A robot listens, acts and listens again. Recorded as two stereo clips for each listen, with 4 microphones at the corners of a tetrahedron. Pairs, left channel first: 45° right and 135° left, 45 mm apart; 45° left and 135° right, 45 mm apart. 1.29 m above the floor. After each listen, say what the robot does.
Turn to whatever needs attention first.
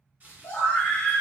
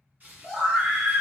Turn 65° right.
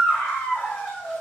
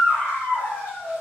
Facing the scream, under 1 m away.